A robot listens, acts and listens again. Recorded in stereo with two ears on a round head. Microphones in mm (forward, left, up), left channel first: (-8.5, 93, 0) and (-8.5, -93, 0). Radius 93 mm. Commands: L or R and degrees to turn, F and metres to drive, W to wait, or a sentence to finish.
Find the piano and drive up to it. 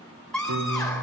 R90
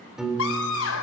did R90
F1.0
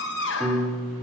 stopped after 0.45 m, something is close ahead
Blocked. The piano is further on, straight ahead.